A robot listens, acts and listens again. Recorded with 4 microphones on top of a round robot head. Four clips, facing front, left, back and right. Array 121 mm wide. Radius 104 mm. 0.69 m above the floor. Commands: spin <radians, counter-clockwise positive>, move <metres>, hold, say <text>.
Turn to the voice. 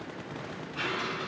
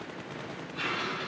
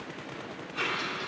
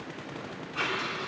hold
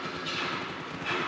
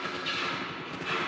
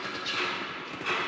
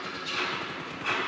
hold
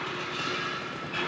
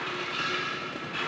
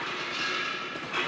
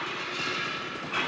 say I can't make out anyone speaking to turn to.